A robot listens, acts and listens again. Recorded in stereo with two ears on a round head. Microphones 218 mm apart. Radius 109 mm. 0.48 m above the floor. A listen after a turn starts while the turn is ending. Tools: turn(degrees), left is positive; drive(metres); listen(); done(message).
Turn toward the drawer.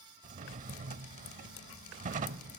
turn(degrees=-35)
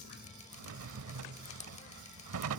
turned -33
turn(degrees=-115)
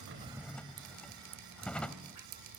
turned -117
done("Found it: a drawer, straight ahead, under 1 m away.")